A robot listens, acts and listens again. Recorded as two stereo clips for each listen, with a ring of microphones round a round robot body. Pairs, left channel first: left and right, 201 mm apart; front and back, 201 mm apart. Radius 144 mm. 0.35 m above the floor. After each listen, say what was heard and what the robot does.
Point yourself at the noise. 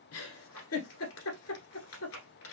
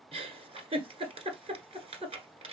The giggle: 120° left. Turn 120° left.
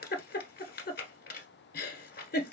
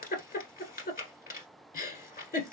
The giggle is now 50° left. Turn 50° left.
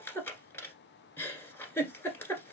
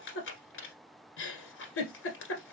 The giggle is now 10° left. Turn 10° left.
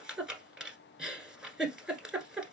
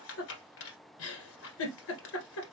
Found it: a giggle, straight ahead, 1 to 2 m away.